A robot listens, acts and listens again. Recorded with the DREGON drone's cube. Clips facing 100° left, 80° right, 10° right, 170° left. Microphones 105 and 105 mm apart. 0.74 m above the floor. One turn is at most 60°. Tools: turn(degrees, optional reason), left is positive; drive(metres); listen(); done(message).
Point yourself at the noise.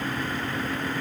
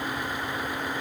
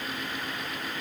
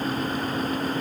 listen()
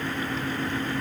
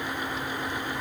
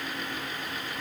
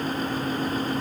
listen()
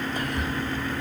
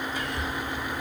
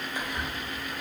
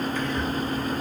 turn(degrees=60, reason="The whispering: 65° left.")
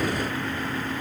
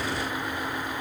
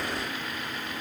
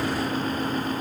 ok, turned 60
listen()
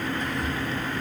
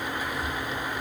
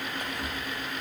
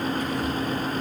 done("Found it: whispering, straight ahead.")